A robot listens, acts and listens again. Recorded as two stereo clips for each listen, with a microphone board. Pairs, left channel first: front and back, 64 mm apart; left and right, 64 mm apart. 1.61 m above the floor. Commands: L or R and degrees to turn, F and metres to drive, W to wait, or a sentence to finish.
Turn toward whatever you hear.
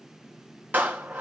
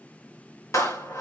L120
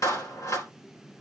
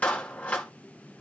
L25
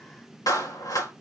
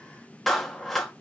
Found it: a clap, straight ahead.